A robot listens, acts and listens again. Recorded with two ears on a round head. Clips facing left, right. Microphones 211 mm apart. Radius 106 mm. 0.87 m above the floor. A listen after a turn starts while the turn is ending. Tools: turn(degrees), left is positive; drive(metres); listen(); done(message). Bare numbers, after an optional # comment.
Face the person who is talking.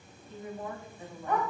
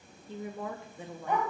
# The woman speaking: about 55° right or 125° right.
turn(-55)
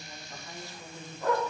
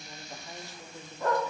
# So it is at 15° right.
turn(-15)
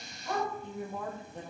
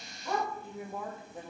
done("Facing the woman speaking, 1 to 2 m away.")